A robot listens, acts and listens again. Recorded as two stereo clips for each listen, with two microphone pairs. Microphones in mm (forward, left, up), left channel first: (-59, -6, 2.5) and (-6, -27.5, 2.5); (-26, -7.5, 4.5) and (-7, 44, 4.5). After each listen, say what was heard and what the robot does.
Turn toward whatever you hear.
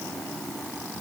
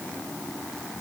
Keep listening.
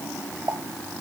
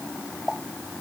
The pop: 20° right. Turn 20° right.
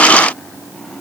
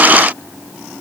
I heard a pop from this way, but can't make it out now.